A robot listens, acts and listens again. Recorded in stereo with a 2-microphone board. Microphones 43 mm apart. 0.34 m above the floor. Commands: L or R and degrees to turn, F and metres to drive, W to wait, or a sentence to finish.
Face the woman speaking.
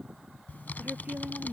R40
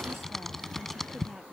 W
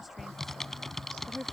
Facing the woman speaking.